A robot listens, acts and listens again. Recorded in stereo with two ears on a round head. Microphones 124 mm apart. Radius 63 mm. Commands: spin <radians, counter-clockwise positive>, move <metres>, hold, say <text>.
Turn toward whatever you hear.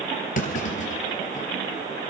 spin 0.96
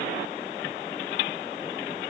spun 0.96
hold
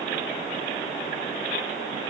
say I heard a clunk, but can't make it out now. It was about straight ahead or 70° left.